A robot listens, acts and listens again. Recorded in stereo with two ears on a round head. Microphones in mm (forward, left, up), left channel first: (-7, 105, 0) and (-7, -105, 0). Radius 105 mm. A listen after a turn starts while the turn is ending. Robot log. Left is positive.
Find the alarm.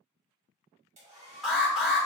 cmd yaw +30
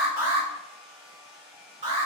note: So it is at 30° right.
cmd yaw -30
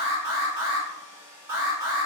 note: The alarm is now 15° right.
cmd yaw -15
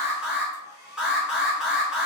end: Facing the alarm, 1 to 2 m away.